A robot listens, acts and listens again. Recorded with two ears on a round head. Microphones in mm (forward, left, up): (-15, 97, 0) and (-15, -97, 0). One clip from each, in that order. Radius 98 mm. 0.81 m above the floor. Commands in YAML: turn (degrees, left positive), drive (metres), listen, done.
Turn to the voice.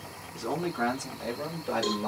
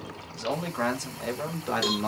turn: -35
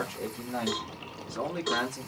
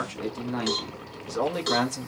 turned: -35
turn: -40
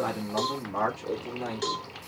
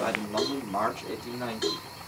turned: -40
turn: -30
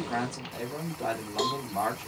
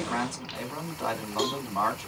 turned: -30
done: "Facing the man speaking."